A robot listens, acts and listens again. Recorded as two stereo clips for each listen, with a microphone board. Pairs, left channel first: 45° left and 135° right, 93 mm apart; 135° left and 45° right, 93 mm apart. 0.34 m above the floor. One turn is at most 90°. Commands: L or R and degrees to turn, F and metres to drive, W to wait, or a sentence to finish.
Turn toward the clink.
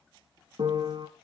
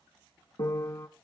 W
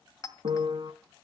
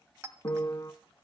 Found it: a clink, straight ahead.